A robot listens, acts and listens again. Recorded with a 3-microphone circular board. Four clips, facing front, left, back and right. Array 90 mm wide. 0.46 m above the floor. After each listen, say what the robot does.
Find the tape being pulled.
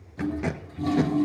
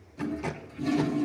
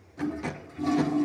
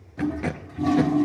Turn 50° right.
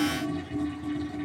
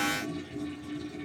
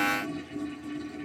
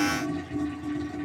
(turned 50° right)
Keep listening.
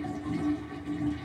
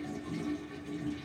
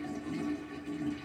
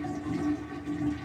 Keep listening.
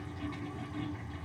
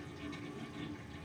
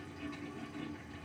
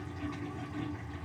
I heard tape being pulled from this way, but can't make it out now.